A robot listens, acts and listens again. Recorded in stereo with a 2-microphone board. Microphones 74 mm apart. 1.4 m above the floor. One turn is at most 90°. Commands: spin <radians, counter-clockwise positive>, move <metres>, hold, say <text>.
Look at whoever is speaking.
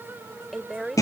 spin 0.52
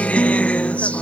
hold
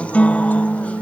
hold
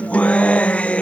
say I heard a woman speaking, but can't make it out now. It was about 30° right or 150° left.